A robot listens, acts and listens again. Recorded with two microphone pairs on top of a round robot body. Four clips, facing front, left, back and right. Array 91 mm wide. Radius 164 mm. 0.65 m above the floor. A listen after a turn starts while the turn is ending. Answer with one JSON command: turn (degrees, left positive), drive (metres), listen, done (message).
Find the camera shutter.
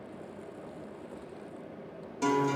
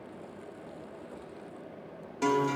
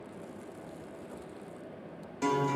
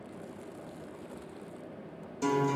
{"listen": true}
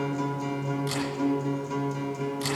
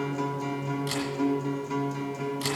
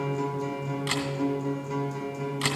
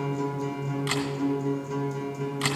{"turn": -125}
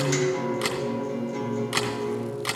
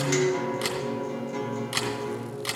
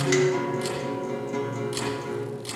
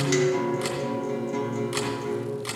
{"done": "Found it: a camera shutter, straight ahead."}